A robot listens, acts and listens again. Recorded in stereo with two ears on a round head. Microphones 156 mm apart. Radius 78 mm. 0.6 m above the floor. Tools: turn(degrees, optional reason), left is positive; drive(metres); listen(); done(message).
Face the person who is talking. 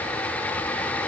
listen()
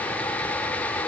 listen()
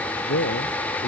turn(degrees=70, reason="The man speaking: about 70° left or 110° left.")
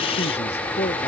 turn(degrees=35, reason="So it is at 35° left.")
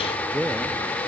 done("Found it: a man speaking, straight ahead.")